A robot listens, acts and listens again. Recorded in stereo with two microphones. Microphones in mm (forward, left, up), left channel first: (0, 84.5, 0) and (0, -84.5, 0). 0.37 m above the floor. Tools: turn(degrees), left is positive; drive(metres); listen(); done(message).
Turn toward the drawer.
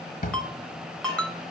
turn(degrees=60)
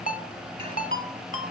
listen()
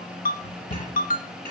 turn(degrees=50)
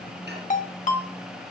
listen()
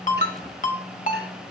listen()
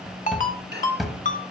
done("Facing the drawer, 1 to 2 m away.")